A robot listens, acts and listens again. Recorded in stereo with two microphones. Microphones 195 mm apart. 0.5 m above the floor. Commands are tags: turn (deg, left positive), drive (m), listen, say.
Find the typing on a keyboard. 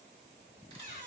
<listen/>
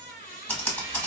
<turn deg="30"/>
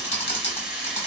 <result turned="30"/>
<turn deg="145"/>
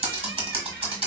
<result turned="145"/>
<turn deg="-30"/>
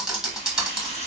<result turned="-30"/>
<say>Facing the typing on a keyboard, 1 to 2 m away.</say>